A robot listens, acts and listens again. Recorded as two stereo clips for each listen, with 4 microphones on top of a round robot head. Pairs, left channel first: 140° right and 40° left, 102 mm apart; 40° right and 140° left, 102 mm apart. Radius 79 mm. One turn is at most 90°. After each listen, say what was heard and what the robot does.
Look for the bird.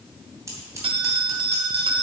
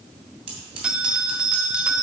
Keep listening.
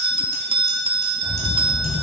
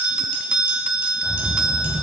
The bird: 155° right. Turn 90° right.
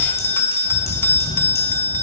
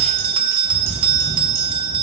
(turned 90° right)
The bird is now 55° right. Turn 55° right.
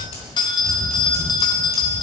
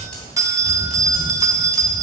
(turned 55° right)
The bird is now 25° right. Turn 25° right.
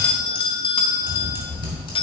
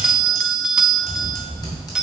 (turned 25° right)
Facing the bird.